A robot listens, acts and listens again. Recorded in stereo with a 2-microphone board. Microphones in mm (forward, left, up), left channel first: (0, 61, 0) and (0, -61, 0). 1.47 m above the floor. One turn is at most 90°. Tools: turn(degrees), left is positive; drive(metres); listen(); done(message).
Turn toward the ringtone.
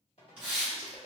turn(degrees=55)
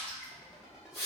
done("Found it: a ringtone, straight ahead, 1 to 2 m away.")